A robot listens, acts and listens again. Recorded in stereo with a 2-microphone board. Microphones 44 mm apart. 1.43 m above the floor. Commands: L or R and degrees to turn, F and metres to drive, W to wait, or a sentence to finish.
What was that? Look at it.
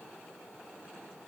W
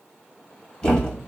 L25
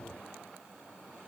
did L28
W
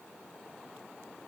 I heard a thud, but can't make it out now. It was about 5° right or 130° left.